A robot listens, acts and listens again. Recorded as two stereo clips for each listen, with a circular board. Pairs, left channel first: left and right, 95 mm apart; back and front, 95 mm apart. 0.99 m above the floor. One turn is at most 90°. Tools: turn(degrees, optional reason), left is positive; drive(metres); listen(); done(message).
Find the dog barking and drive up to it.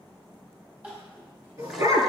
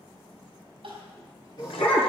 turn(degrees=-90, reason="The dog barking: 140° right.")
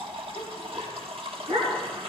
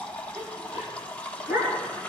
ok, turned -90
turn(degrees=-65, reason="The dog barking is now 65° right.")
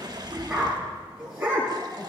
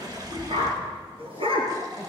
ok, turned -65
turn(degrees=-10, reason="The dog barking is now 10° right.")
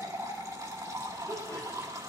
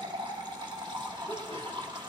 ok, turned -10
listen()
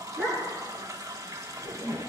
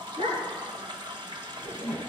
drive(metres=1.0)
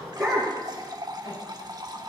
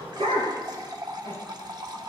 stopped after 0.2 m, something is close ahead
done("Blocked. The dog barking is further on, straight ahead.")